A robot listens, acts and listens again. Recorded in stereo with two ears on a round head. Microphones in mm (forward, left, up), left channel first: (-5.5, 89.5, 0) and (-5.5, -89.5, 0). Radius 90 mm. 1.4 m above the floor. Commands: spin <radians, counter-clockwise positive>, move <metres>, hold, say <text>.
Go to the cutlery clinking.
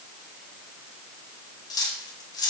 spin 0.35
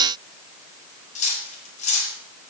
spin 2.44
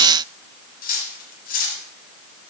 spin 0.79
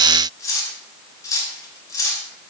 spin 0.26
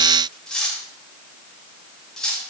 move 1.0
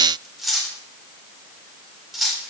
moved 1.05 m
move 1.0
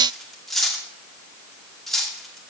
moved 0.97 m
move 1.0
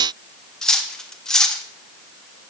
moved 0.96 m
move 1.0
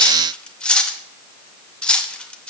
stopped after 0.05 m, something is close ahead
say I am next to the cutlery clinking.